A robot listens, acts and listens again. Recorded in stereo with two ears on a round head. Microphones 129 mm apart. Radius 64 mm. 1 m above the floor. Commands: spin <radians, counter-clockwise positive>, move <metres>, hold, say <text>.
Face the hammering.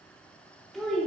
hold
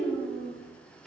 hold
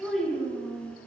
say I can't make out hammering, only a child speaking.